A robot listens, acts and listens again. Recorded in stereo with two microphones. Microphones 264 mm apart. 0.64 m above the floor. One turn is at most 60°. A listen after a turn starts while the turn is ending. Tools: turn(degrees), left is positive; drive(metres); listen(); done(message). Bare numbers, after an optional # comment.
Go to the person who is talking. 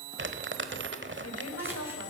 # The woman speaking: about 65° left or 115° left.
turn(60)
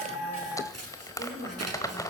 # So it is at 45° left.
turn(45)
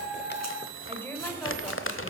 # The woman speaking is now 10° left.
turn(10)
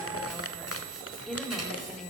drive(1.0)
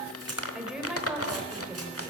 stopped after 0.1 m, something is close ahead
done("Blocked. The woman speaking is further on, straight ahead.")